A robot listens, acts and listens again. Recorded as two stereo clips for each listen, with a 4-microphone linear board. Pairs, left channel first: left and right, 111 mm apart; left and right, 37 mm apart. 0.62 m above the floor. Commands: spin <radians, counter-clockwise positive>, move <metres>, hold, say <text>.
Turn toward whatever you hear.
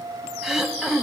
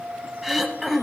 spin 0.52
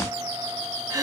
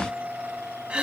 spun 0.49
spin -0.52
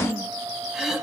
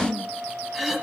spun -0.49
say Found it: throat clearing, straight ahead, 1 to 2 m away.